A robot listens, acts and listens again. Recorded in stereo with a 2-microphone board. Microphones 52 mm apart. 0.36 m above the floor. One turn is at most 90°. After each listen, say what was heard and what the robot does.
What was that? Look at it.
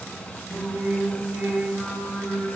The singing: about 50° right or 130° right. Turn 50° right.
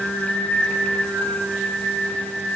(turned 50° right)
So it is at 70° right. Turn 70° right.
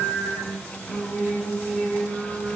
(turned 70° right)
The singing is now 25° left. Turn 25° left.
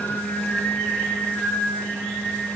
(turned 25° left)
Found it: singing, straight ahead, 2 to 4 m away.